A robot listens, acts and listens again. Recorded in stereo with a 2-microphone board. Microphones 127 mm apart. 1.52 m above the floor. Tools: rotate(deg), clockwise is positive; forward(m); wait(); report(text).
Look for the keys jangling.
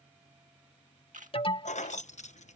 rotate(-65)
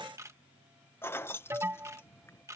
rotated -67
rotate(-20)
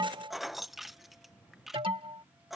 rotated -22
report("Found it: keys jangling, straight ahead.")